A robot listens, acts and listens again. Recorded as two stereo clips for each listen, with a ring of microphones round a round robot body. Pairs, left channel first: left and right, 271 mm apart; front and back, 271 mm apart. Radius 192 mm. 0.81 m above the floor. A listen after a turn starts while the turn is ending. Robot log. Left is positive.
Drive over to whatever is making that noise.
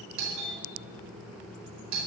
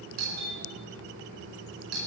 note: The doorbell: 130° right.
cmd yaw -130
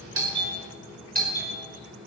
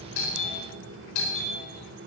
note: The doorbell is now 35° right.
cmd yaw -35
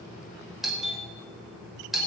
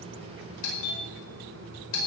cmd fwd 1.0
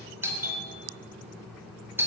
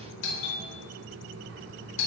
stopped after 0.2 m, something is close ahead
note: The doorbell is now 10° right.
cmd yaw -10
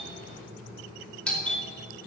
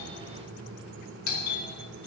end: Something is in my way. I am facing the doorbell but have not reached it.